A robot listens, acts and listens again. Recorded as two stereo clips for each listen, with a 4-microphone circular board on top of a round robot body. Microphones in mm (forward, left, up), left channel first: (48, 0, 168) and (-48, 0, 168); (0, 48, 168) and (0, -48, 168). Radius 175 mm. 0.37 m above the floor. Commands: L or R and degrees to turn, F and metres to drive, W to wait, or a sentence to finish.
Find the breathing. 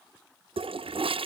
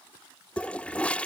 W
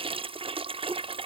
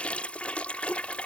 W
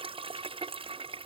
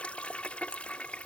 I can't make out breathing, only a toilet flushing.